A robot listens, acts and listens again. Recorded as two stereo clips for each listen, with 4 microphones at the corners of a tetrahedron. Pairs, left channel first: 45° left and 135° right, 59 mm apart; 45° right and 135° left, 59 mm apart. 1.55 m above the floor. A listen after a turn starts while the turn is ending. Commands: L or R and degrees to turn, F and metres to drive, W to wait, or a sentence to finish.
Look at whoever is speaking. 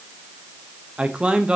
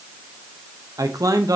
L150
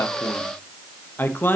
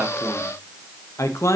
R10
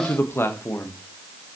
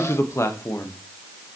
Found it: a man speaking, straight ahead.